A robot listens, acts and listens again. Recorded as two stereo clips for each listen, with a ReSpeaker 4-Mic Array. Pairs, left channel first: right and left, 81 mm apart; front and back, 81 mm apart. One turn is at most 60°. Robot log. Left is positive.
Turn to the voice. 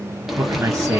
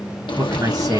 note: The man speaking: 150° left.
cmd yaw +60
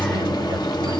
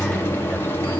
note: Nothing new. It was at 90° left.
cmd yaw +60
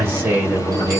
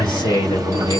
note: The man speaking is now 30° left.
cmd yaw +30
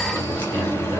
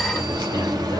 cmd idle
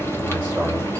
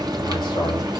cmd idle
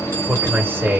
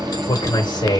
note: The man speaking is now 25° left.
cmd yaw +25
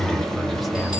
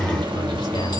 cmd idle
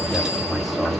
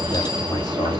cmd idle
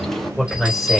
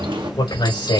end: Found it: a man speaking, straight ahead, 2 to 4 m away.